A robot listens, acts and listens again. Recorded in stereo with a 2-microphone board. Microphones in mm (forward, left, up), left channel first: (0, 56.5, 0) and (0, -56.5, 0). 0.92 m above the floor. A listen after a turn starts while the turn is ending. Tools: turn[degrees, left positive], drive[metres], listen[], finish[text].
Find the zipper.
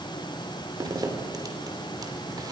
Thought: The zipper: about 35° right or 145° right.
Action: turn[-35]
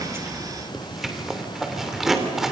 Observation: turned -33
Action: finish[Facing the zipper.]